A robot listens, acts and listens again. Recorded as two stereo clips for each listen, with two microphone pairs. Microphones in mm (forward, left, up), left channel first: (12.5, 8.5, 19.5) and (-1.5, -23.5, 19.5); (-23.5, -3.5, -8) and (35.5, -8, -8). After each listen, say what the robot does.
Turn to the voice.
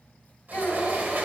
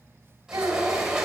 Turn 30° left.
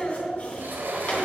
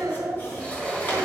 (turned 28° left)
Facing the child speaking, 2 to 4 m away.